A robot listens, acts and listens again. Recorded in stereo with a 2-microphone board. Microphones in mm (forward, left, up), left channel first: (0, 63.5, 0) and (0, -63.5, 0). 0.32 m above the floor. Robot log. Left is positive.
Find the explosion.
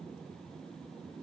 cmd idle
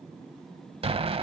note: The explosion: about 50° right or 130° right.
cmd yaw -50
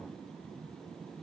cmd idle
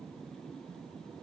end: I heard an explosion, but can't make it out now. It was about straight ahead or 80° right.